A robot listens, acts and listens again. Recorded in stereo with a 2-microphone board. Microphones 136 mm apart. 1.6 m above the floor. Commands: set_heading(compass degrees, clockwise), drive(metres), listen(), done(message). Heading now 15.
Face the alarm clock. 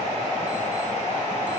listen()
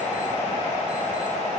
listen()
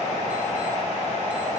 done("I can't make out an alarm clock.")